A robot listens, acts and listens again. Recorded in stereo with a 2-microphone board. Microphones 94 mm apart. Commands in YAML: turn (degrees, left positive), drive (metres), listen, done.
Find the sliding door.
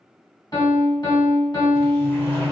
turn: 30
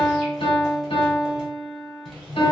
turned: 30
done: "Found it: a sliding door, straight ahead, 1 to 2 m away."